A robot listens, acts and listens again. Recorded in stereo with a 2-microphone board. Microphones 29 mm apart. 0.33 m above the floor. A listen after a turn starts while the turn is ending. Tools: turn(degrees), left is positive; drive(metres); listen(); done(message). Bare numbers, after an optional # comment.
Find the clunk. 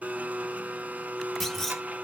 turn(30)
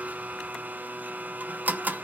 listen()
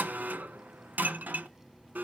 done("I heard a clunk, but can't make it out now. It was about 25° right or 145° left.")